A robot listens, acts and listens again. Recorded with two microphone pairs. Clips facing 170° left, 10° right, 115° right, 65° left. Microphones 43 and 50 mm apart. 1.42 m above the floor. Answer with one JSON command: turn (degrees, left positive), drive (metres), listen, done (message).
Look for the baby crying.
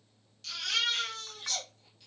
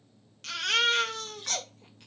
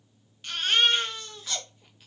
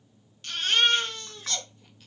{"turn": -35}
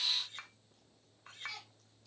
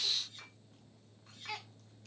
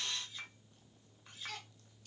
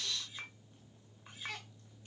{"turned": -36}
{"done": "Facing the baby crying."}